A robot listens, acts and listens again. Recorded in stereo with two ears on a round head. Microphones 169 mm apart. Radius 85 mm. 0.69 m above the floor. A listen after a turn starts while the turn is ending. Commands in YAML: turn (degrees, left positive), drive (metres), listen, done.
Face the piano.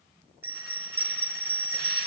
listen: true
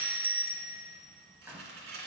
listen: true
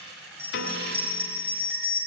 turn: 60
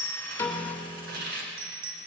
done: "Facing the piano, 1 to 2 m away."